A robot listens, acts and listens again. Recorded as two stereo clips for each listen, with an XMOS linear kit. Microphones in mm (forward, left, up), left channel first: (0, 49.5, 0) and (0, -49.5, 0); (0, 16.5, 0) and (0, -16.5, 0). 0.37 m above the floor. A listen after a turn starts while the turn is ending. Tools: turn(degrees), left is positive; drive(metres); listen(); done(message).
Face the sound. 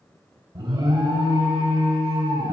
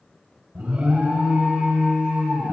turn(degrees=-50)
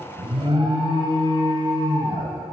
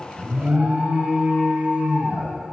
turn(degrees=-65)
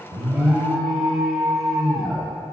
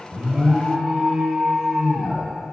done("Found it: an alarm, straight ahead, 1 to 2 m away.")